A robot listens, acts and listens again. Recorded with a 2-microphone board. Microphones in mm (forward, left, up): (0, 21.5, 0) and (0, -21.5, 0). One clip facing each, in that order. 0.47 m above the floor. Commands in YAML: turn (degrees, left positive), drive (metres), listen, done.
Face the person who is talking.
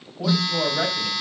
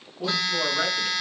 turn: 25
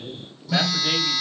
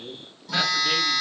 turn: 130
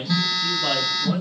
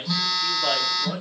done: "Found it: a man speaking, straight ahead, 2 to 4 m away."